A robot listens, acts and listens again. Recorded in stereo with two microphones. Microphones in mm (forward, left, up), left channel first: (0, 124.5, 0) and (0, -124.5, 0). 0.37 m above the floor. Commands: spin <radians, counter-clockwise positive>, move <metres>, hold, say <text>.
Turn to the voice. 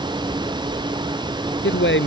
spin 0.96
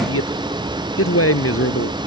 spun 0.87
spin 1.31
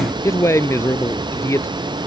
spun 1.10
spin 0.17
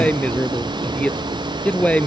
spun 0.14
say Found it: a man speaking, straight ahead.